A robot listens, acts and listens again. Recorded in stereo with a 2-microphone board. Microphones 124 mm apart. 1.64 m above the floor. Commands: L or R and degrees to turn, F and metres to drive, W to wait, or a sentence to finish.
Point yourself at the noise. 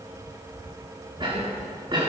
R40
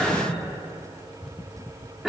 Found it: a cough, straight ahead, over 4 m away.